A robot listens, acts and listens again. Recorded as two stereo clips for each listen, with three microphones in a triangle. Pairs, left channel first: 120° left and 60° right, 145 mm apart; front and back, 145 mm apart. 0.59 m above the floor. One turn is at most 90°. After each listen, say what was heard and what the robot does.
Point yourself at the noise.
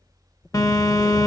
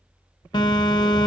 The phone buzzing: 55° left. Turn 55° left.
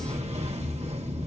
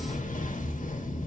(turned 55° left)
The phone buzzing is now 20° right. Turn 20° right.
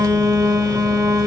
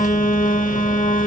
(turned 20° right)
Facing the phone buzzing, 1 to 2 m away.